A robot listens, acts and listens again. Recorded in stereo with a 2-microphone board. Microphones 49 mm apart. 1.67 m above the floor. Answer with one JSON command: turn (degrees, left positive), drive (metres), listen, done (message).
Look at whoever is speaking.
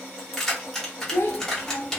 {"turn": 50}
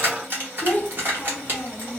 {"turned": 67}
{"turn": 45}
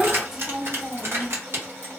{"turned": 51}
{"turn": -10}
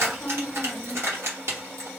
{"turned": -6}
{"done": "Facing the child speaking."}